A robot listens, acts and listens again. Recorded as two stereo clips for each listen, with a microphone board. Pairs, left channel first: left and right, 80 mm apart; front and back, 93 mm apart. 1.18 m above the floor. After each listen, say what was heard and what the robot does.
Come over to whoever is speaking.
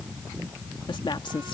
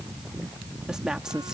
The woman speaking: 95° left. Turn 95° left.
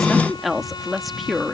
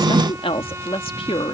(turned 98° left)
Drive 1.0 m forward.
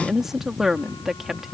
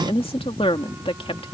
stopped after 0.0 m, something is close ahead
Blocked. The woman speaking is further on, straight ahead.